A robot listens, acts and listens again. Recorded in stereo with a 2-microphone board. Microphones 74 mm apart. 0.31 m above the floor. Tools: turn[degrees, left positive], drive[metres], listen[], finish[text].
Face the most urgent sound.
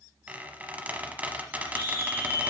Action: turn[30]
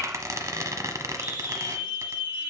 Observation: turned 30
Thought: So it is at 15° right.
Action: turn[-15]
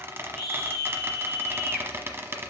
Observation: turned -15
Action: finish[Found it: a scream, straight ahead.]